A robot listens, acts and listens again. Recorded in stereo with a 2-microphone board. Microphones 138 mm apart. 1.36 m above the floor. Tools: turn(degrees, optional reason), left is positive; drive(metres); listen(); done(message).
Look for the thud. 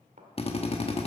turn(degrees=-65, reason="The thud: about 65° right or 115° right.")
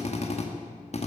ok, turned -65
listen()
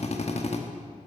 done("I heard a thud, but can't make it out now. It was about straight ahead or 50° right.")